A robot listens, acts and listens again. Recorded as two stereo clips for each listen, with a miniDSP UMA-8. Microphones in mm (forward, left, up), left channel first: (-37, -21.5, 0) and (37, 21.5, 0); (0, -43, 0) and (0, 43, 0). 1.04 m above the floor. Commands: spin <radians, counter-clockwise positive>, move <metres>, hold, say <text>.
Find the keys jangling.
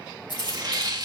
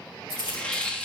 spin -2.09
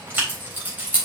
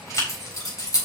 spin -0.70
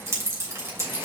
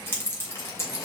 spin -0.52
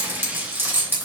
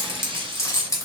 spin -0.61
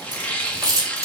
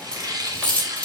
spin -0.26
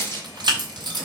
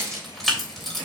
say Found it: keys jangling, straight ahead, 2 to 4 m away.